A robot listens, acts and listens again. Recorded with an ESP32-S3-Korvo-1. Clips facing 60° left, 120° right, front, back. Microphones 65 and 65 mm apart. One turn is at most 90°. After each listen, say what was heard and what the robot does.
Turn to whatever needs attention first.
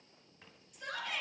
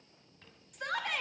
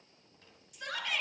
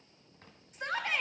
The shout: 130° right. Turn 90° right.
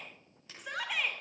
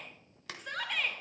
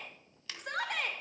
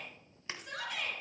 The shout is now 25° right. Turn 25° right.
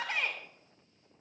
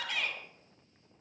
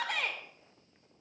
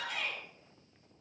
Facing the shout.